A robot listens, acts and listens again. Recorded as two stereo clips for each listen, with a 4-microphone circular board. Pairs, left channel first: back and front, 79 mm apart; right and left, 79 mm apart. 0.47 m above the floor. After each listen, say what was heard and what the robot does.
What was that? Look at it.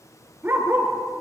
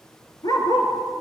The dog barking: 65° right. Turn 65° right.
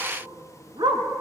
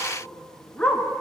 The dog barking is now 15° right. Turn 15° right.
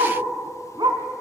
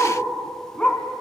The dog barking is now 15° right. Turn 15° right.
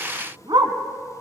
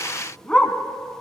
The dog barking is now 10° right. Turn 10° right.
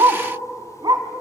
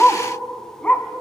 The dog barking is now 20° right. Turn 20° right.
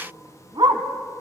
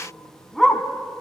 Found it: a dog barking, straight ahead, 1 to 2 m away.